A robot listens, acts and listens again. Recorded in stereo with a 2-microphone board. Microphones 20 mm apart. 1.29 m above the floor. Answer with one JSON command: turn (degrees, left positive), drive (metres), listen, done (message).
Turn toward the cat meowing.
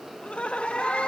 {"turn": 70}
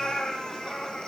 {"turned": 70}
{"turn": 40}
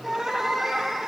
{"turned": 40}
{"done": "Facing the cat meowing."}